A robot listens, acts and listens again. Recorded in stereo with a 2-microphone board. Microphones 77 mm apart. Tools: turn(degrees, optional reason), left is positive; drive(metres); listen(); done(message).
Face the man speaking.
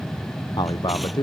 turn(degrees=70, reason="The man speaking: about 70° left or 110° left.")
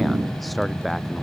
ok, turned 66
done("Facing the man speaking.")